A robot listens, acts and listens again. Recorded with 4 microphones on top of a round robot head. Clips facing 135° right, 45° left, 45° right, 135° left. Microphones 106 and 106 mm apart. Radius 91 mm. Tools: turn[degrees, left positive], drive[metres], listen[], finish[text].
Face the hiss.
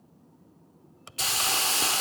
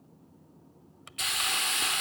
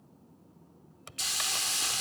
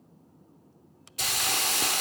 Thought: The hiss: 170° left.
Action: turn[170]
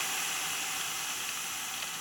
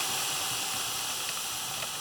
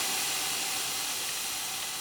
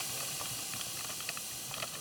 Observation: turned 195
Thought: The hiss is now 25° right.
Action: turn[-25]
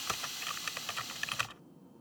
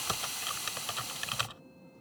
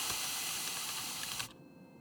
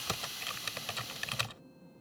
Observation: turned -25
Action: finish[Found it: a hiss, straight ahead.]